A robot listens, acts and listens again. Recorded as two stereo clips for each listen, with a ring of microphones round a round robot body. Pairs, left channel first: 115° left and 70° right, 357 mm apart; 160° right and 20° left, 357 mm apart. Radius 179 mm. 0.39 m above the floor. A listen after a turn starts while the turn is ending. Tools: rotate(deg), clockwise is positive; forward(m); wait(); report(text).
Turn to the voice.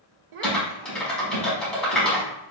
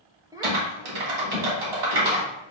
rotate(55)
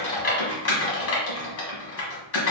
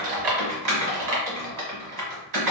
wait()
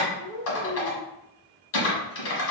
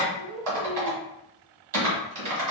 rotate(20)
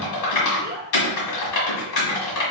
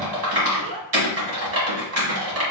rotate(10)
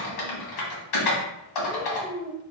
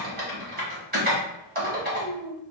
report("Facing the child speaking, under 1 m away.")